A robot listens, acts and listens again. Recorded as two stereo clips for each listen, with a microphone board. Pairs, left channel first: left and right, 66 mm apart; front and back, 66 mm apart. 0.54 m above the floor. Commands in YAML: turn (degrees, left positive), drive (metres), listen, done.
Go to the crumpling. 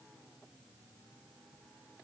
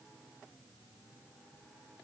listen: true
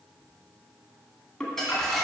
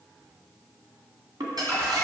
turn: 175
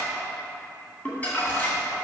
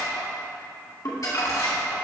turn: 25
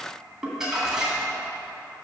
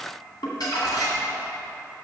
drive: 1.0
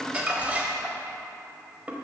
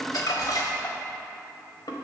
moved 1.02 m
turn: -20
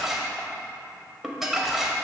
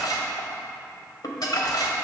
drive: 1.0
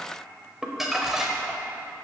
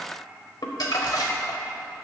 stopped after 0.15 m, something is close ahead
done: "Arrived at the crumpling, straight ahead."